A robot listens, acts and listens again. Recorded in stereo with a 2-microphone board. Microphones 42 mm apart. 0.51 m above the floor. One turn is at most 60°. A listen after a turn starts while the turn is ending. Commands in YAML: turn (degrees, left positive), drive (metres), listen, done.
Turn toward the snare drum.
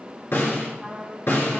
turn: 60
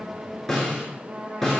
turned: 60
done: "Found it: a snare drum, straight ahead."